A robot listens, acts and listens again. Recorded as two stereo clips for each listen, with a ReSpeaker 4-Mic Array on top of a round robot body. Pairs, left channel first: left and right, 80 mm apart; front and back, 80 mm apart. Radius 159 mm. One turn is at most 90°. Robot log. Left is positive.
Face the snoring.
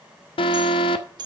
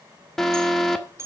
cmd idle
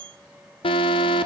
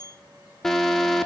cmd idle
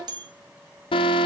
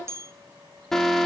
end: I can't make out snoring to turn to.